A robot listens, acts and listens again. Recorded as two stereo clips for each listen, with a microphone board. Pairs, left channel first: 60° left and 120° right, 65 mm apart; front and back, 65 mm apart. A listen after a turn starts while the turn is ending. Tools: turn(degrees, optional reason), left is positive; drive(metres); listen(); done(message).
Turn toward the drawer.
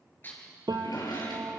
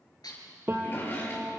turn(degrees=55, reason="The drawer: 55° left.")
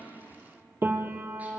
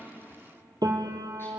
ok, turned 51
listen()
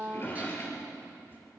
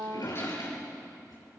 done("Facing the drawer.")